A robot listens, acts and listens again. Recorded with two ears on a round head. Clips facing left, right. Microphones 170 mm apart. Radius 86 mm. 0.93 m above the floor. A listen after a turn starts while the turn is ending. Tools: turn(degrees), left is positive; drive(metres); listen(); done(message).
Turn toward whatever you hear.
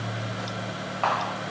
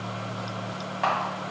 turn(degrees=-30)
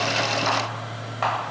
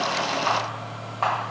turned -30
turn(degrees=15)
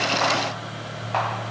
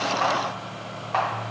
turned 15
listen()
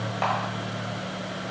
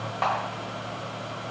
done("Facing the camera shutter.")